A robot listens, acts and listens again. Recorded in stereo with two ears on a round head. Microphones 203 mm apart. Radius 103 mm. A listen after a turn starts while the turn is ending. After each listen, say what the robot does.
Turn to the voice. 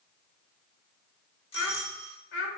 Turn 60° left.
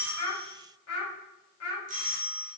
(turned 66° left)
Turn 75° left.
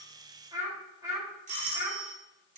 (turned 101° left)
Turn 15° right.
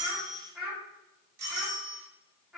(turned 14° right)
Found it: a child speaking, straight ahead, 2 to 4 m away.